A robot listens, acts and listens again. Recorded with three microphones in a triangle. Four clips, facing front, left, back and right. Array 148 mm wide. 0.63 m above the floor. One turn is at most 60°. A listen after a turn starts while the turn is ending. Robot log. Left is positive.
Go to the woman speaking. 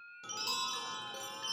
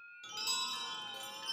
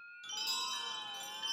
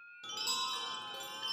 cmd idle
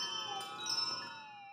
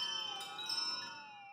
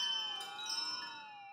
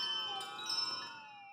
cmd idle
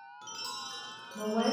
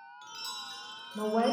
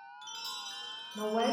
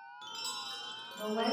note: The woman speaking: 105° left.
cmd yaw +60
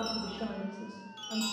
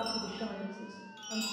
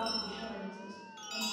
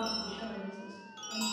note: The woman speaking is now 30° left.
cmd yaw +30
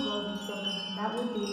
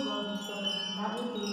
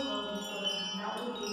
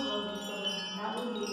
cmd fwd 1.0
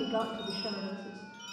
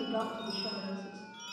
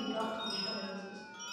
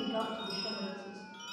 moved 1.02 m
note: The woman speaking is now 10° left.
cmd yaw +10
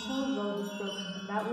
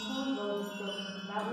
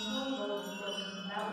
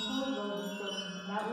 cmd fwd 1.0
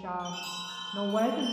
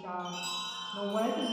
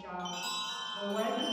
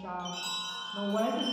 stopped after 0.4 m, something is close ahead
end: I am next to the woman speaking.